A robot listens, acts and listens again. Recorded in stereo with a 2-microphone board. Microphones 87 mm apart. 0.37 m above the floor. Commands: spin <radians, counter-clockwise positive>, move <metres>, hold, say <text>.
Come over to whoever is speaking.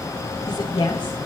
spin 1.05
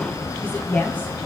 spin 0.35
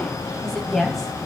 move 1.0
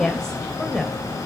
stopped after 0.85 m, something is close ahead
say Arrived at the woman speaking, straight ahead.